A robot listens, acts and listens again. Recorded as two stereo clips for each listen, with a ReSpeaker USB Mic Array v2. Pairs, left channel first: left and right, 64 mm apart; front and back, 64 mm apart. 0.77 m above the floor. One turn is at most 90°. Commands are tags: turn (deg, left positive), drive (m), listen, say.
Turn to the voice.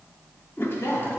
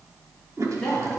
<turn deg="80"/>
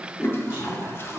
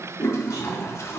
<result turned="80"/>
<listen/>
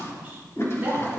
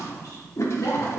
<turn deg="-25"/>
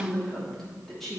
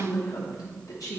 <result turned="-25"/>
<say>Found it: a woman speaking, straight ahead.</say>